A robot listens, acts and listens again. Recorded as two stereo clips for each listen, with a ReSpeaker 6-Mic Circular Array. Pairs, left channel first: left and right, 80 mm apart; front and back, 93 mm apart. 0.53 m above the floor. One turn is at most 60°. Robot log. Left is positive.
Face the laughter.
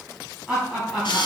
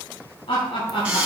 end: Found it: laughter, straight ahead.